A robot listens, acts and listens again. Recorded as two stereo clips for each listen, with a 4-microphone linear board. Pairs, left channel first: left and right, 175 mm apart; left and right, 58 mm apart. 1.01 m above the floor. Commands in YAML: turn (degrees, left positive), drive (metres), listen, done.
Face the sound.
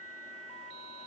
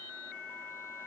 listen: true
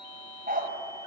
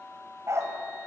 turn: -55
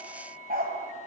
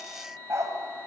turn: -55
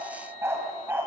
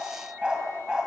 turn: -10
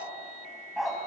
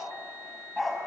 done: "Found it: a dog barking, straight ahead."